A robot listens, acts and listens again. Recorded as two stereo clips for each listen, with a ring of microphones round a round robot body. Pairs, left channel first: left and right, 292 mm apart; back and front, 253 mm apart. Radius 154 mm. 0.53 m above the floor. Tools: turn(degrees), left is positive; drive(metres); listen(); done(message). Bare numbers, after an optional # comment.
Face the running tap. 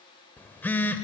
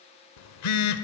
listen()
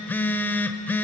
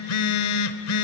listen()
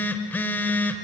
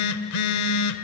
done("I can't make out a running tap to turn to.")